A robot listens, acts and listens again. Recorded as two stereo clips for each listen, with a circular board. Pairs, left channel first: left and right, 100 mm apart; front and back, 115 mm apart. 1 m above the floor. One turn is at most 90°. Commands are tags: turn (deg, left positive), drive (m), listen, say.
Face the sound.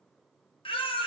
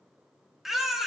<turn deg="90"/>
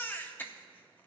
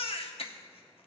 <turn deg="20"/>
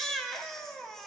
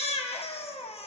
<say>Facing the baby crying.</say>